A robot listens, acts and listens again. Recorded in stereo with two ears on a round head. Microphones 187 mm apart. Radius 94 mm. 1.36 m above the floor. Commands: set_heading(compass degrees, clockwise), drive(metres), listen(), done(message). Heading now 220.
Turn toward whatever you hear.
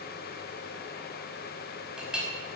set_heading(250)
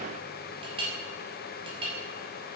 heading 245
set_heading(35)
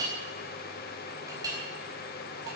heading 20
set_heading(40)
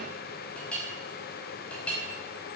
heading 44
done("Found it: a clink, straight ahead.")